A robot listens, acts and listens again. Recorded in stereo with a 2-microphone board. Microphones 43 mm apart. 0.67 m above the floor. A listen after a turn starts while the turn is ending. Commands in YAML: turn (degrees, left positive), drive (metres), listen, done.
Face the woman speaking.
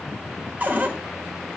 listen: true
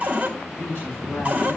turn: 35
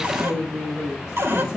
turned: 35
done: "Found it: a woman speaking, straight ahead, 2 to 4 m away."